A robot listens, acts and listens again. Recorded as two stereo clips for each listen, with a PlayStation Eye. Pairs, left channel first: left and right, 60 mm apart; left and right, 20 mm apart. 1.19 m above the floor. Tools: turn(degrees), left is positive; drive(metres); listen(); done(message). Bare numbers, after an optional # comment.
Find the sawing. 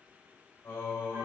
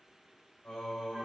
listen()
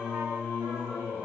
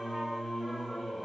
listen()
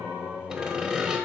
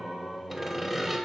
turn(-30)
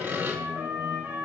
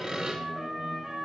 # So it is at 135° right.
turn(-135)
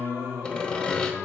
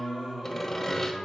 # The sawing is now 20° left.
turn(20)
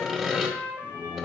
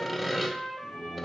done("Facing the sawing.")